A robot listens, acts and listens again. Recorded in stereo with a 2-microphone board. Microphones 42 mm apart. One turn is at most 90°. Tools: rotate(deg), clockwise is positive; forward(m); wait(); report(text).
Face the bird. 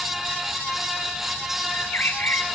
rotate(-65)
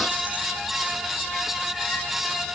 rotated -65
wait()
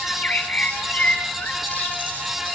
rotate(-40)
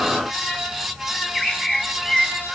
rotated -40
report("Facing the bird, 2 to 4 m away.")